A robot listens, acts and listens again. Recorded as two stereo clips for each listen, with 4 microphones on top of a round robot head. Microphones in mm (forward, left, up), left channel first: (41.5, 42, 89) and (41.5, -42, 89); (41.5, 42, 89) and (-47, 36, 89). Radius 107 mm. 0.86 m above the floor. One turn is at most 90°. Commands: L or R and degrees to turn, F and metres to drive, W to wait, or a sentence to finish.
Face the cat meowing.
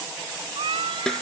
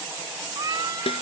R90
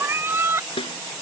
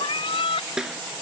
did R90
R30
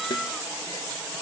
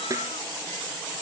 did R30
W
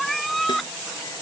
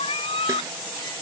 Facing the cat meowing.